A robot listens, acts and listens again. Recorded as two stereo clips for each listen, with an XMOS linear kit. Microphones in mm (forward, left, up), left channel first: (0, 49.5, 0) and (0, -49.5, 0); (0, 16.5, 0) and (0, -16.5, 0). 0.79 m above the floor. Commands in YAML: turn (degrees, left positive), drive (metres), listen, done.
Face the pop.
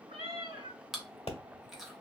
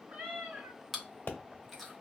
turn: 90
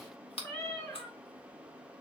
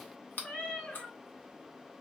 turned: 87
done: "Facing where the pop came from. I can't hear it now."